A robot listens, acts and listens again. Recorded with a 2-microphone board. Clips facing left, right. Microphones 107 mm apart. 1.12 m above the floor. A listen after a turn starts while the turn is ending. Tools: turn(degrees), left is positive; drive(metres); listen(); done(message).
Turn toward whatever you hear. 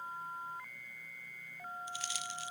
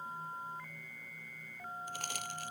turn(degrees=-50)
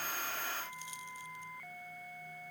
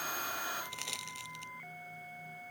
turn(degrees=-80)
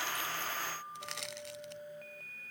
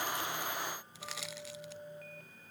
done("Found it: crushing, straight ahead.")